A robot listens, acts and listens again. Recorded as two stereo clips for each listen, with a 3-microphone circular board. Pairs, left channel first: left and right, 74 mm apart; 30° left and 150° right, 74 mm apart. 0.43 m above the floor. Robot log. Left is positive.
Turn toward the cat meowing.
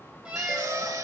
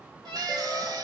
note: The cat meowing: 165° right.
cmd yaw -165
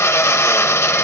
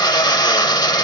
cmd idle
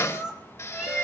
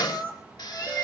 note: The cat meowing is now 10° right.
cmd yaw -10
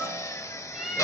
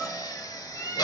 end: Facing the cat meowing, 2 to 4 m away.